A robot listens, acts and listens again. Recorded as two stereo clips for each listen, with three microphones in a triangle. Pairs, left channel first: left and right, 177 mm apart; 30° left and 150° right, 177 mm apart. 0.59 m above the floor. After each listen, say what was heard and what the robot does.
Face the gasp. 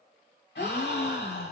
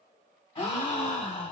The gasp: 85° left. Turn 85° left.
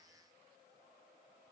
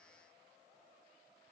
I heard a gasp from this way, but can't make it out now.